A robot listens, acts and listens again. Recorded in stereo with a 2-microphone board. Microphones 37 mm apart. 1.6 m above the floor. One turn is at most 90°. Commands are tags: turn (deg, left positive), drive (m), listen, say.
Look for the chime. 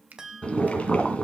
<turn deg="-20"/>
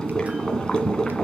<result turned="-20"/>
<listen/>
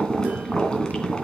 <listen/>
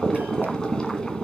<say>I heard a chime, but can't make it out now. It was about straight ahead or 140° right.</say>